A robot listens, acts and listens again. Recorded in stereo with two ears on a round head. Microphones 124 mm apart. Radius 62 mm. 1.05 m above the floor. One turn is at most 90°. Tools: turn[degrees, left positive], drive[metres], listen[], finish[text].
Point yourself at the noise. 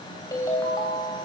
Thought: The ringtone: about 25° left or 155° left.
Action: turn[25]
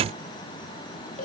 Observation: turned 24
Thought: So it is at 130° left.
Action: turn[90]
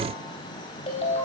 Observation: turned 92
Thought: The ringtone is now 40° left.
Action: turn[40]
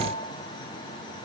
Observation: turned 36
Action: listen[]
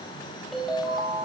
Action: finish[Found it: a ringtone, straight ahead, 2 to 4 m away.]